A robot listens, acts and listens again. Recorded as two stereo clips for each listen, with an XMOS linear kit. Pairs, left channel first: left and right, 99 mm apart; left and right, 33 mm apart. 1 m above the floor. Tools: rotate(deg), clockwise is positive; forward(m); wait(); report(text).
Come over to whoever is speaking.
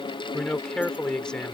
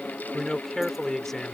rotate(-30)
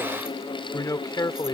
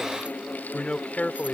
rotate(-140)
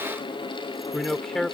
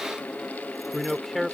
forward(1.0)
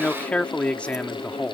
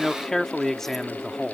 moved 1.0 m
rotate(-15)
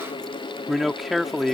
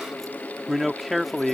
forward(1.0)
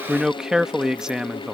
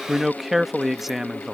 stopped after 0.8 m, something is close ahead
report("I am next to the man speaking.")